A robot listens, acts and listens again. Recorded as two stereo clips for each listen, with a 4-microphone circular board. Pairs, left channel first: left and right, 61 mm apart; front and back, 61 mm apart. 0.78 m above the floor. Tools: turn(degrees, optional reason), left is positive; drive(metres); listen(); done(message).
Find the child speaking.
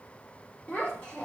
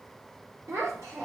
turn(degrees=150, reason="The child speaking: 150° left.")
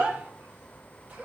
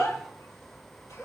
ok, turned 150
turn(degrees=-25, reason="The child speaking is now 25° right.")
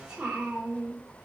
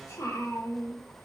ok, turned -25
turn(degrees=-10, reason="The child speaking is now 10° right.")
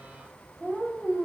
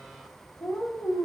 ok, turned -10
done("Found it: a child speaking, straight ahead, 1 to 2 m away.")